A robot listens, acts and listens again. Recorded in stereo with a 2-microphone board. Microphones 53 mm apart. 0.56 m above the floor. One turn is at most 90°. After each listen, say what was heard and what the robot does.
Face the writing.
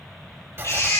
The writing: about 50° right or 130° right. Turn 50° right.
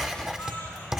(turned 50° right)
So it is at 15° right. Turn 15° right.
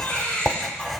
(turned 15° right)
Found it: writing, straight ahead.